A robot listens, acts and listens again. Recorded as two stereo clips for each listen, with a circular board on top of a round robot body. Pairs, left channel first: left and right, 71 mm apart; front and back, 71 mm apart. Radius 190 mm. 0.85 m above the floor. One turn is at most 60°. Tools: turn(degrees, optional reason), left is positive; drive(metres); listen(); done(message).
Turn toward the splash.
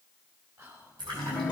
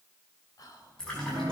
turn(degrees=-60, reason="The splash: 80° right.")
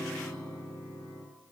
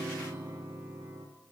turn(degrees=-20, reason="Nothing new. It was at 20° right.")
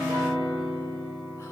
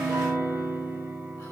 done("I heard a splash from this way, but can't make it out now.")